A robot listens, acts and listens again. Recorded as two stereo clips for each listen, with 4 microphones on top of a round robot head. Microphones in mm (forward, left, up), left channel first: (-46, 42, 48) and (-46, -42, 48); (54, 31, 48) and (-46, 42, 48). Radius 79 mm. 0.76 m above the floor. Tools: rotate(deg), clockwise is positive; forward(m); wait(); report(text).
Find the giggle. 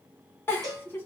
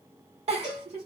rotate(-155)
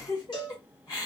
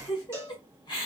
rotate(-35)
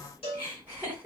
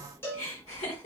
rotate(15)
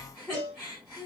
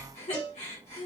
report("Found it: a giggle, straight ahead.")